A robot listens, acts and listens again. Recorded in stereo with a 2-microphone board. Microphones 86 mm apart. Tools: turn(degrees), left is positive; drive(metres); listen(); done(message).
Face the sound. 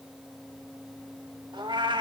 turn(degrees=-70)
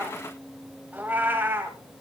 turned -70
turn(degrees=-25)
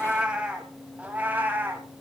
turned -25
turn(degrees=-20)
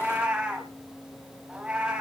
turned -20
turn(degrees=-10)
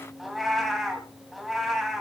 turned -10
done("Facing the cat meowing.")